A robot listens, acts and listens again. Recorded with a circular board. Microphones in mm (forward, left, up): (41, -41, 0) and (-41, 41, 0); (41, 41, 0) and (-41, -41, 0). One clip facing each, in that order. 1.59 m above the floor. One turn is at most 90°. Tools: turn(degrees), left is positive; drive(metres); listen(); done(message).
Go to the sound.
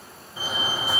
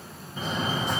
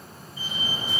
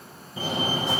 turn(degrees=-90)
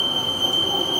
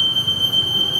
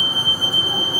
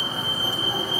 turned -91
turn(degrees=-45)
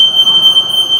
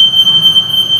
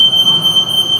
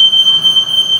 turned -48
drive(metres=1.0)
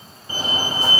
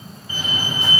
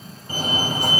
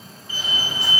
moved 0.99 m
drive(metres=1.0)
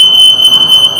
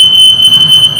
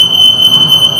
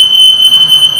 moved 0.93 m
drive(metres=1.0)
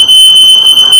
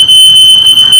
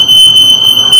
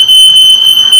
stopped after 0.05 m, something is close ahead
done("I am next to the fire alarm.")